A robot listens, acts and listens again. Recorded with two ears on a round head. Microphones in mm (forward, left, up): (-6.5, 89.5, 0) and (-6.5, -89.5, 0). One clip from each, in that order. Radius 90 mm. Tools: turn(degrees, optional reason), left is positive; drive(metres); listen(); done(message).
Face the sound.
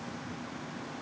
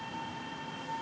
listen()
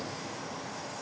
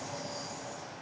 listen()
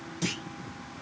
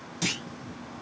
turn(degrees=-25, reason="The clunk: about 25° right or 155° right.")
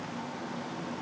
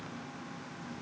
listen()
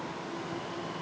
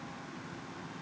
done("I heard a clunk, but can't make it out now. It was about straight ahead or 130° right.")